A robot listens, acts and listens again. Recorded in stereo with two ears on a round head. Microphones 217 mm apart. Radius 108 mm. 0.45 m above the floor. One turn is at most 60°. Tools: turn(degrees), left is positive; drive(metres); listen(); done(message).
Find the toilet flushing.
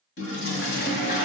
turn(degrees=45)
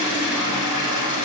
turn(degrees=60)
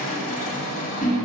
turn(degrees=30)
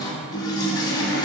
turn(degrees=20)
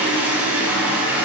done("Found it: a toilet flushing, straight ahead.")